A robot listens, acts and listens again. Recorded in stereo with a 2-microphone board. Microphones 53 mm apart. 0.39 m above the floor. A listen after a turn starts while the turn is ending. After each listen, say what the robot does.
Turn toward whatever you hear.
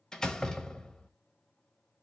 Turn 30° left.
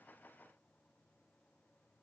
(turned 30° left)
Keep listening.
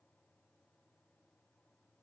I heard a door slam, but can't make it out now. It was about 20° right or 140° left.